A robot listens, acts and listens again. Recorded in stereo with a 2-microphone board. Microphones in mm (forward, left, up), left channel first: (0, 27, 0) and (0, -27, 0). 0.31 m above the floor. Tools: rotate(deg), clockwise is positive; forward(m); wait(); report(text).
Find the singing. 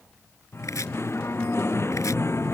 rotate(-55)
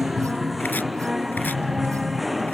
report("Facing the singing.")